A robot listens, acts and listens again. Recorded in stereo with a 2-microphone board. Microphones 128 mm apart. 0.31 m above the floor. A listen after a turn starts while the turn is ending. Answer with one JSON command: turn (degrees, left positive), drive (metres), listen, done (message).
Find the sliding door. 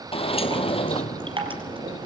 {"turn": 45}
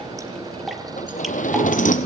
{"turn": 90}
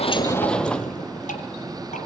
{"done": "Found it: a sliding door, straight ahead, 1 to 2 m away."}